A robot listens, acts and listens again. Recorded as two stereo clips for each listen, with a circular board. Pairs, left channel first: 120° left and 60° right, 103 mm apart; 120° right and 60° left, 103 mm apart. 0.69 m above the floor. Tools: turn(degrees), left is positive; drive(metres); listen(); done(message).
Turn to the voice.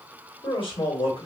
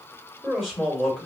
turn(degrees=155)
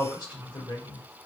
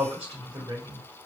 turn(degrees=85)
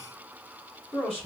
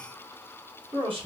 turn(degrees=35)
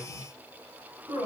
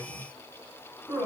done("Found it: a man speaking, straight ahead, 2 to 4 m away.")